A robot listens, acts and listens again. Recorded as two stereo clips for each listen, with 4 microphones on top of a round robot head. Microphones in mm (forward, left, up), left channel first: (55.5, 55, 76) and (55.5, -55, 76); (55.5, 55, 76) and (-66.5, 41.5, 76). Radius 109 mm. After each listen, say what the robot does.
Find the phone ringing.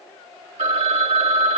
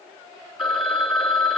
Turn 85° right.
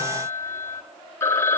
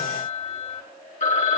Turn 25° left.
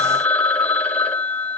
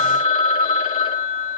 Turn 15° left.
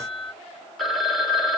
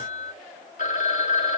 Facing the phone ringing, 2 to 4 m away.